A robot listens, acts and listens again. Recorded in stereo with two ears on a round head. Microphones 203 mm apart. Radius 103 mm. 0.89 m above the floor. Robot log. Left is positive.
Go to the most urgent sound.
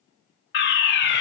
note: The fire alarm: about 50° left or 130° left.
cmd yaw +50
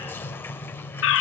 note: So it is at 70° left.
cmd yaw +70
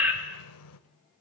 note: The fire alarm is now 10° right.
cmd yaw -10
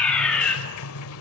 cmd fwd 1.0
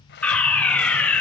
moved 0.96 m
cmd fwd 1.0
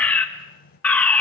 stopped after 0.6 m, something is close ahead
note: The fire alarm is now 10° left.
cmd yaw +10
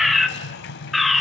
end: Arrived at the fire alarm, straight ahead.